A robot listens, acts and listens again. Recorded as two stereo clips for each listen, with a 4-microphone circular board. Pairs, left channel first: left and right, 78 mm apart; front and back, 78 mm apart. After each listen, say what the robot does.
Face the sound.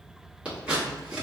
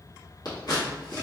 Turn 20° right.
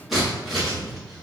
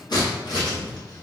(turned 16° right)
Facing the scissors.